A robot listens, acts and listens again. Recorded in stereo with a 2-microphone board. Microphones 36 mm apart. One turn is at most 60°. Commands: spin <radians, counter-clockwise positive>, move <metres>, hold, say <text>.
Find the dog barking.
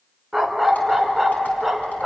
spin -0.52
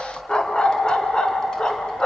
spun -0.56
spin 0.44
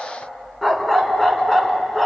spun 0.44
say Facing the dog barking.